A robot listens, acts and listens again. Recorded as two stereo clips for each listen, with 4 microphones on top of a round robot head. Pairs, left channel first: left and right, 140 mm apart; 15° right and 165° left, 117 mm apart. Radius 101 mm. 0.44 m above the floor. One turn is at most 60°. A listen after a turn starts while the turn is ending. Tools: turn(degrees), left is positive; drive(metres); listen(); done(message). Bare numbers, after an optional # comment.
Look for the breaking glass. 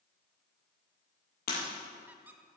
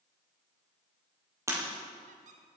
# The breaking glass: 100° left.
turn(60)
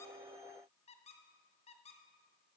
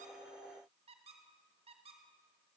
# Nothing new. It was at 40° left.
turn(40)
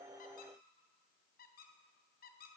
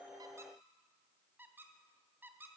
done("Facing where the breaking glass came from. I can't hear it now.")